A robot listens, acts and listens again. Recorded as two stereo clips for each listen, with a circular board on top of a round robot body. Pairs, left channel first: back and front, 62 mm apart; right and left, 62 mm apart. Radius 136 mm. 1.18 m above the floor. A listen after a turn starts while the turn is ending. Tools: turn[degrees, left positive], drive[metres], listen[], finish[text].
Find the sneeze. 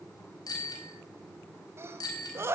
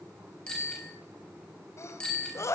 Thought: The sneeze: 45° right.
Action: turn[-45]
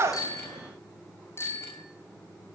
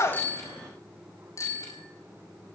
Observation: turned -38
Thought: Nothing new. It was at 10° right.
Action: turn[-10]
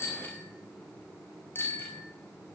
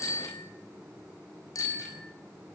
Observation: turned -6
Action: finish[Facing where the sneeze came from. I can't hear it now.]